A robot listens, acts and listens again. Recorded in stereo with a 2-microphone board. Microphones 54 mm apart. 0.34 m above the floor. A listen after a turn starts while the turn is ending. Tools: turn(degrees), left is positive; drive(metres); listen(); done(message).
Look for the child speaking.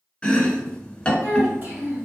turn(degrees=-40)
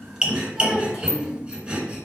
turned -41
done("Found it: a child speaking, straight ahead, 1 to 2 m away.")